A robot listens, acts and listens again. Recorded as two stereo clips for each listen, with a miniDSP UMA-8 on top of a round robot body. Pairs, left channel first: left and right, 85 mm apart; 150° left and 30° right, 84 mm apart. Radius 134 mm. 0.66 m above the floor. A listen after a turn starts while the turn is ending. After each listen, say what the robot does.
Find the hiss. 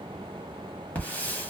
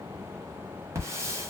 Turn 20° left.
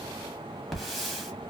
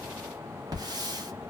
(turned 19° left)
Found it: a hiss, straight ahead.